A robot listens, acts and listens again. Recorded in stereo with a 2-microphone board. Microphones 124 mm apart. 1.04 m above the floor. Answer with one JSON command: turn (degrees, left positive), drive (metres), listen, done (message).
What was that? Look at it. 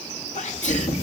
{"turn": 90}
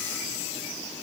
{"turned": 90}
{"done": "Facing where the sneeze came from. I can't hear it now."}